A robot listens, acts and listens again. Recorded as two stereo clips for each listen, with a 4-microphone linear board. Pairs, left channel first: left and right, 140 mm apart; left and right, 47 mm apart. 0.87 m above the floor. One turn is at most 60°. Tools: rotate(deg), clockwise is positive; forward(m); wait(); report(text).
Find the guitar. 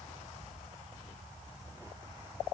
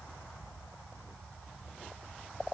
wait()
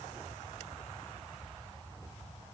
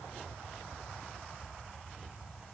wait()
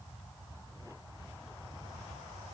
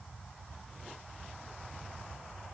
report("I can't make out a guitar to turn to.")